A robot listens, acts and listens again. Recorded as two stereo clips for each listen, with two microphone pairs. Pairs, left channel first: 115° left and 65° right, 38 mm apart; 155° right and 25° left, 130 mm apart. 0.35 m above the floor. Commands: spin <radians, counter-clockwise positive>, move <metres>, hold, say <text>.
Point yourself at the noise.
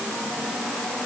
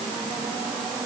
hold
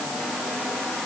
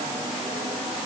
hold
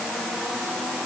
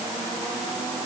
say I can't make out anything.